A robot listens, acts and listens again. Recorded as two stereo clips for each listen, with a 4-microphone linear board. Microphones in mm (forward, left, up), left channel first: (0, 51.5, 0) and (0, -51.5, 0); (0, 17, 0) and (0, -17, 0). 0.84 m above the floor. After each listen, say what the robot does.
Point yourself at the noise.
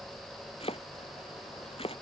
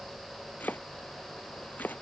Turn 65° left.
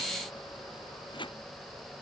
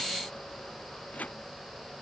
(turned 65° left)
Turn 50° left.
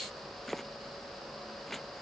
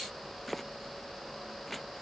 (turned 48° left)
Facing the chopping.